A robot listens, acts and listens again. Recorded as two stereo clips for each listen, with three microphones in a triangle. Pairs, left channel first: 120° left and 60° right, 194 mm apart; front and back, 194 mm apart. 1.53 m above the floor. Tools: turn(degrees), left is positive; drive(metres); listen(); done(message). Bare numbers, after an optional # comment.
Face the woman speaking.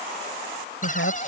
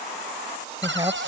# The woman speaking: 110° left.
turn(110)
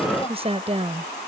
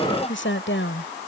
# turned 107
done("Found it: a woman speaking, straight ahead.")